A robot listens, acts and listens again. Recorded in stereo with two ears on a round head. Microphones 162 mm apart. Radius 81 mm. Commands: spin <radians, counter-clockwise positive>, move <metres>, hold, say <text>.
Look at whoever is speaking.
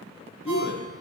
spin 1.22
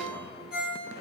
hold
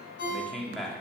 say Found it: a man speaking, straight ahead.